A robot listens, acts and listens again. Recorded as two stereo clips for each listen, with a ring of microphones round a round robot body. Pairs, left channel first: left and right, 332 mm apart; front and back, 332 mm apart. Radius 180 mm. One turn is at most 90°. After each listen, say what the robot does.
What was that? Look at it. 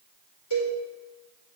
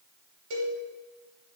Turn 90° left.
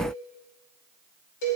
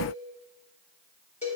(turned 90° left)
Turn 70° left.
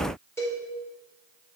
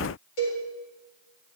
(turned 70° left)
Found it: a cowbell, straight ahead.